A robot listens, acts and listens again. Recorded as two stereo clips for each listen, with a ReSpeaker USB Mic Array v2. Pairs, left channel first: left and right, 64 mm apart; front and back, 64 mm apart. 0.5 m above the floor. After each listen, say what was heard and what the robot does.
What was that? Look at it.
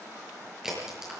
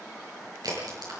The crack: 175° right. Turn 175° right.
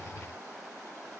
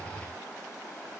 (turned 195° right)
Nothing new. It was at 20° left. Turn 20° left.
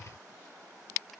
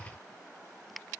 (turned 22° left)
Facing where the crack came from. I can't hear it now.